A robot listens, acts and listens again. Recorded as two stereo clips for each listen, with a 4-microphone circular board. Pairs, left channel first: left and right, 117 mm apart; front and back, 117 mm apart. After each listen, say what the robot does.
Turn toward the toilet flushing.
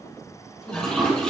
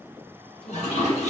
Turn 10° left.
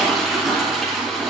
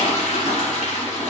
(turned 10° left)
Facing the toilet flushing, 2 to 4 m away.